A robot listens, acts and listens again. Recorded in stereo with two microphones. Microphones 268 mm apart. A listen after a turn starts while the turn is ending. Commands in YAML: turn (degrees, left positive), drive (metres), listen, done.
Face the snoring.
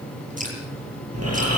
turn: -65
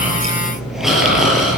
done: "Found it: snoring, straight ahead, over 4 m away."